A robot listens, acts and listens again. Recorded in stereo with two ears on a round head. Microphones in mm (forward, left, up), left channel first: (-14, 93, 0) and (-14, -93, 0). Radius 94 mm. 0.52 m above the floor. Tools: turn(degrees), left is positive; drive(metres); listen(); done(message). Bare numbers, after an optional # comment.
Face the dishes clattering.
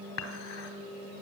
# The dishes clattering: about 70° left or 110° left.
turn(70)
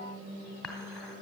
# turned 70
done("Facing the dishes clattering.")